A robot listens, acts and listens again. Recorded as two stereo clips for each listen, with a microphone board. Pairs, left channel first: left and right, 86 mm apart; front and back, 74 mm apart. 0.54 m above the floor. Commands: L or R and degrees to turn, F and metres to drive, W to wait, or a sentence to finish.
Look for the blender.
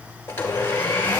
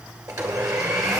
L150
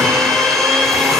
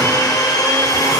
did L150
Found it: a blender, straight ahead, 1 to 2 m away.